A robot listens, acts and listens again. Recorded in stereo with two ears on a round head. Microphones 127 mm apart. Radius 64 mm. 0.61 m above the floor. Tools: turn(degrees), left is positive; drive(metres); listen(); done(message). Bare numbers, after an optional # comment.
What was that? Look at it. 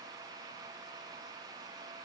listen()
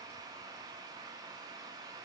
listen()
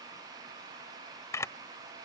# The camera shutter: about 20° left or 160° left.
turn(20)
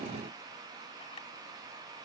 listen()
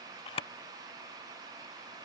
# So it is at 140° left.
turn(140)
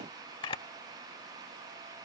# The camera shutter is now 35° left.
turn(35)
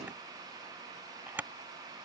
# The camera shutter is now 15° right.
turn(-15)
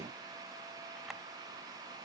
listen()
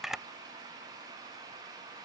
done("Found it: a camera shutter, straight ahead.")